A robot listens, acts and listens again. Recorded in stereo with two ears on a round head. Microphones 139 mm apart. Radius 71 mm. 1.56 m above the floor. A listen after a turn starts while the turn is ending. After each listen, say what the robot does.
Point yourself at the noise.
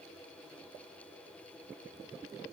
Keep listening.
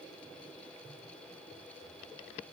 Keep listening.
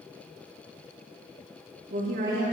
Turn 55° right.
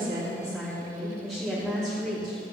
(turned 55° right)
Facing the woman speaking, 2 to 4 m away.